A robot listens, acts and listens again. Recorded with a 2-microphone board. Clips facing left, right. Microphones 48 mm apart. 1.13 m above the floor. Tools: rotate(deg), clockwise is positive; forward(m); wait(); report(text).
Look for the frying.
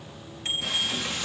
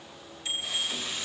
rotate(-90)
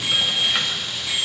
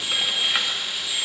report("Facing the frying, 1 to 2 m away.")